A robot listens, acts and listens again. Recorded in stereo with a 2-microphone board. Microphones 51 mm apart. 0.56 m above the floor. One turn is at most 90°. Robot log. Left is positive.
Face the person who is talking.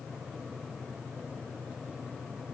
cmd idle
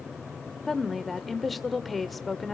cmd yaw +30
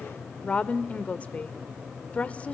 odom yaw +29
note: So it is at 150° left.
cmd yaw +90
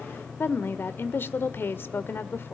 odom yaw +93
note: The woman speaking is now 60° left.
cmd yaw +60
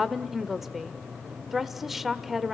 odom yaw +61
end: Found it: a woman speaking, straight ahead, 1 to 2 m away.